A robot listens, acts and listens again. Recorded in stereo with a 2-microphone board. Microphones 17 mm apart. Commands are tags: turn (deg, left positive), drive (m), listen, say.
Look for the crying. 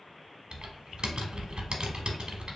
<listen/>
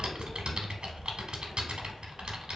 <listen/>
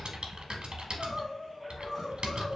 <turn deg="30"/>
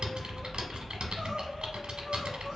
<listen/>
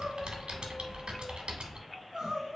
<turn deg="-30"/>
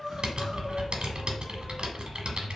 <say>Found it: crying, straight ahead.</say>